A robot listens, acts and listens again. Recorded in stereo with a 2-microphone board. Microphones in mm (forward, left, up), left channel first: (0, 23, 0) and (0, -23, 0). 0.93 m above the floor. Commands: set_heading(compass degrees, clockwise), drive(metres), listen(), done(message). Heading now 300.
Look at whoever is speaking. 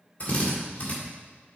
listen()
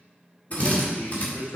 set_heading(230)
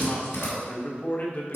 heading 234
set_heading(189)
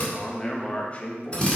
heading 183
set_heading(148)
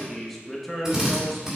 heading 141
done("Found it: a man speaking, straight ahead, 1 to 2 m away.")